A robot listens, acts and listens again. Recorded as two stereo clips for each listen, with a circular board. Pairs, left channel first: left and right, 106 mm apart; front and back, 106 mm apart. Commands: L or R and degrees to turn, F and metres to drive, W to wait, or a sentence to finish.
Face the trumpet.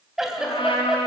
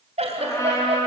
L60
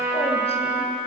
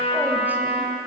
R20
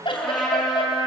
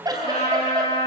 Found it: a trumpet, straight ahead, over 4 m away.